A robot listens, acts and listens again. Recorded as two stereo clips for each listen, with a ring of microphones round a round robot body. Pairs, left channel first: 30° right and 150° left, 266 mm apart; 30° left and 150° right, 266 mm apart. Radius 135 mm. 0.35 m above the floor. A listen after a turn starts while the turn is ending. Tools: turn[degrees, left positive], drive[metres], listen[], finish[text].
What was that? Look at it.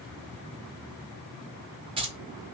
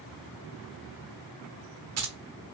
Thought: The keys jangling: 140° right.
Action: turn[-140]
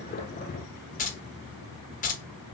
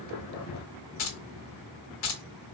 Thought: The keys jangling is now 25° left.
Action: turn[25]
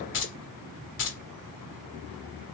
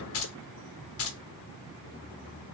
Action: finish[Facing the keys jangling, 1 to 2 m away.]